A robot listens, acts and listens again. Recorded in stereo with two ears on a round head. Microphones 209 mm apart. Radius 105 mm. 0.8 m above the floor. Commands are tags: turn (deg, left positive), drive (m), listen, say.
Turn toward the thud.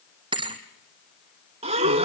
<turn deg="-20"/>
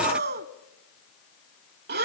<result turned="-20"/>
<listen/>
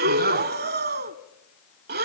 <say>I heard a thud, but can't make it out now. It was about straight ahead or 140° right.</say>